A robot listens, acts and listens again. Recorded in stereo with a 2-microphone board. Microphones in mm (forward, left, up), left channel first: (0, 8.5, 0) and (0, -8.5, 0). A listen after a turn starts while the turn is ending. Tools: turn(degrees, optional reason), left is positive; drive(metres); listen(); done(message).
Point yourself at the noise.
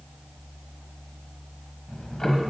turn(degrees=25, reason="The ticking: about 25° left or 155° left.")
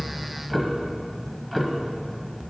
done("Facing the ticking.")